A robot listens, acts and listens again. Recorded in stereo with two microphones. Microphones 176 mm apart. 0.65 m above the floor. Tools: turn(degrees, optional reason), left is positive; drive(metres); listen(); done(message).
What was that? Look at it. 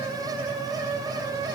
listen()
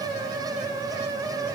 listen()
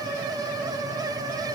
done("I can't make out anything.")